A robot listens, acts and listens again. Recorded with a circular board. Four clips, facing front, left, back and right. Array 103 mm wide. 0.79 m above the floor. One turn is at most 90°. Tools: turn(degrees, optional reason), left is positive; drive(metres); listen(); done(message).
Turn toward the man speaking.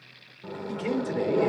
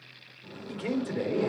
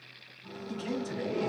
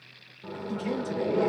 turn(degrees=30, reason="The man speaking: 30° left.")
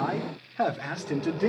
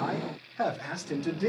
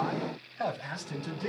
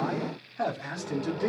done("Facing the man speaking.")